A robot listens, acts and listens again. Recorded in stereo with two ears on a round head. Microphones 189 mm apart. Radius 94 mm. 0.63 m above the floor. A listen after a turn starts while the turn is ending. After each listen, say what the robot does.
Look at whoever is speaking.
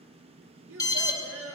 Turn 65° right.
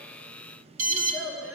Found it: a child speaking, straight ahead, over 4 m away.